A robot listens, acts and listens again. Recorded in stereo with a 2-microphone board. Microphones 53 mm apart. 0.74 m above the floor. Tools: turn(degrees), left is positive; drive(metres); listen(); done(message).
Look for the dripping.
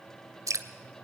turn(degrees=-90)
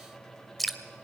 done("Found it: dripping, straight ahead, 1 to 2 m away.")